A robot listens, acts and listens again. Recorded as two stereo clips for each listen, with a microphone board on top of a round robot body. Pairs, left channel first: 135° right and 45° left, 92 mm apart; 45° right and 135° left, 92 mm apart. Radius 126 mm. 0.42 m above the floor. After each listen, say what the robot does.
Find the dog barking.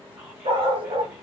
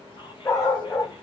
Turn 10° left.
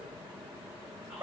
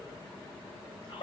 Turn 15° right.
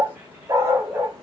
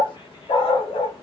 Turn 20° right.
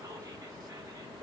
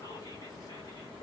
Keep listening.
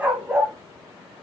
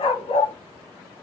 Turn 35° right.
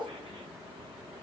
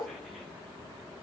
Keep listening.
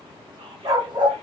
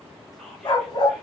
Found it: a dog barking, straight ahead.